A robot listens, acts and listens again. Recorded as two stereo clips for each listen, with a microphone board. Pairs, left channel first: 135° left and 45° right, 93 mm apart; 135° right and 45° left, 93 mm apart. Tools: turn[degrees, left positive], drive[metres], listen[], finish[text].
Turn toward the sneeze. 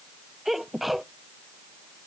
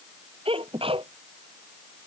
Thought: The sneeze: 45° left.
Action: turn[45]
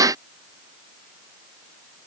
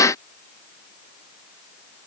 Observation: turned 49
Action: finish[Facing where the sneeze came from. I can't hear it now.]